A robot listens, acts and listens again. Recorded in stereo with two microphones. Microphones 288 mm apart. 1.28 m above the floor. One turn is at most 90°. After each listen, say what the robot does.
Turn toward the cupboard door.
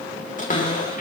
Turn 25° left.
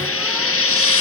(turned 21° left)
Keep listening.
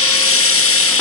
Keep listening.
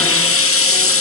I heard a cupboard door, but can't make it out now. It was about 5° left or 130° left.